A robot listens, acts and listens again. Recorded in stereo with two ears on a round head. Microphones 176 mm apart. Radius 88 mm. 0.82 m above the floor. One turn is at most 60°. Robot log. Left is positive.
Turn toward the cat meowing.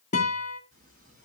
note: The cat meowing: about 40° right or 140° right.
cmd yaw -40
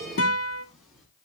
end: Found it: a cat meowing, straight ahead.